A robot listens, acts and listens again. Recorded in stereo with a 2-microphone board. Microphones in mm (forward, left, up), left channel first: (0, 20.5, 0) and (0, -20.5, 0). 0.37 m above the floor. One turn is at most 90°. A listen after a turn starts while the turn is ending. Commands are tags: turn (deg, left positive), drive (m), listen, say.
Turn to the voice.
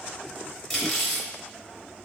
<listen/>
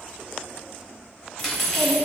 <turn deg="40"/>
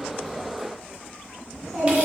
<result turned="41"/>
<say>Facing the child speaking, 1 to 2 m away.</say>